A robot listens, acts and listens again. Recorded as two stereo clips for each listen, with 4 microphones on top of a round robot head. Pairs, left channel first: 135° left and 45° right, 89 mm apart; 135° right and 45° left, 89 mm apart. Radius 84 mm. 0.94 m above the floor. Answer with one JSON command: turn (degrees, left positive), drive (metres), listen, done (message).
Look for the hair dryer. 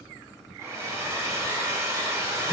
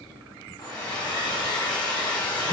{"turn": -100}
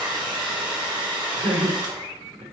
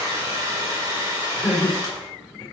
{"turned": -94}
{"done": "Facing the hair dryer."}